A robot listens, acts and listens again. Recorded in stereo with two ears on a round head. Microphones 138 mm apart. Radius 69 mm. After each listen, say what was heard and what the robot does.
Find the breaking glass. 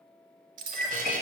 The breaking glass: about 55° right or 125° right. Turn 55° right.
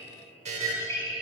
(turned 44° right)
Keep listening.
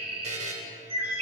I heard breaking glass, but can't make it out now. It was about 10° right or 80° right.